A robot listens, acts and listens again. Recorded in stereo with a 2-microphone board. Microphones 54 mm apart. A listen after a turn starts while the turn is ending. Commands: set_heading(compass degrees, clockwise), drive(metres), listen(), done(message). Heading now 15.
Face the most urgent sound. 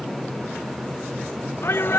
set_heading(320)
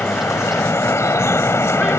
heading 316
listen()
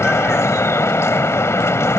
listen()
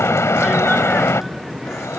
done("I heard a shout, but can't make it out now. It was about 5° right or 70° left.")